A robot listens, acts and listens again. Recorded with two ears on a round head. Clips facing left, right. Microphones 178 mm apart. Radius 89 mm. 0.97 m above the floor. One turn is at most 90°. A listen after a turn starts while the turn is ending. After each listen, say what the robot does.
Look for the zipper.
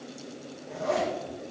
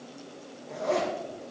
Turn 30° left.
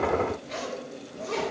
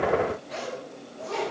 Turn 90° left.
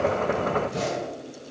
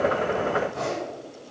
Turn 80° left.
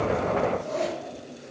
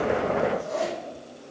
Turn 10° right.
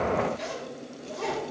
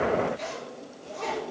Facing the zipper, over 4 m away.